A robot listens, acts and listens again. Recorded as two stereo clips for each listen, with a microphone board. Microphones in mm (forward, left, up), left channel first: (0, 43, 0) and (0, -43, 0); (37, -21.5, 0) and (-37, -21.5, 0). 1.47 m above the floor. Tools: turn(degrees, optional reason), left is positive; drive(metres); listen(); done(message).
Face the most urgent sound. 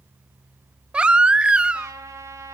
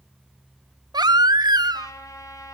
turn(degrees=-170, reason="The baby crying: 170° right.")
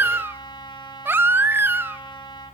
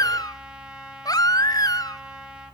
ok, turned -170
turn(degrees=-30, reason="The baby crying is now 30° right.")
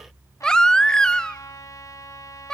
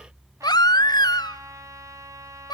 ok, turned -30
turn(degrees=10, reason="The baby crying is now 10° left.")
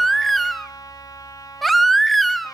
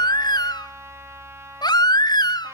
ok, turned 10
done("Facing the baby crying, under 1 m away.")